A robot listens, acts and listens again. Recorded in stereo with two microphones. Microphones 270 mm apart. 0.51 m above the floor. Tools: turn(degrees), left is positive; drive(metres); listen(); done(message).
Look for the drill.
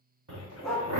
turn(degrees=-70)
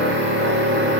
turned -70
turn(degrees=-45)
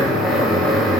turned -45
done("Facing the drill.")